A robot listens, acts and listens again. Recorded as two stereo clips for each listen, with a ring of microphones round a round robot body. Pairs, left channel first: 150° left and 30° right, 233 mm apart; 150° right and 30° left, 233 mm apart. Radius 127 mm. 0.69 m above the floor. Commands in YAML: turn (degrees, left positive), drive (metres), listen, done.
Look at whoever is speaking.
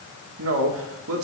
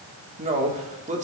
turn: -25
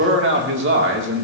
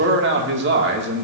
done: "Found it: a man speaking, straight ahead."